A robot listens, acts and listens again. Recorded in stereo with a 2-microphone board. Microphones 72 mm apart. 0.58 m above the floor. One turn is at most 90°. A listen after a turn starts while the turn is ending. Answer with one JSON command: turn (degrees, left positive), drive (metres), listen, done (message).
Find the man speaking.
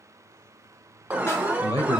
{"turn": 75}
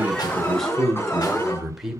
{"done": "Found it: a man speaking, straight ahead, 1 to 2 m away."}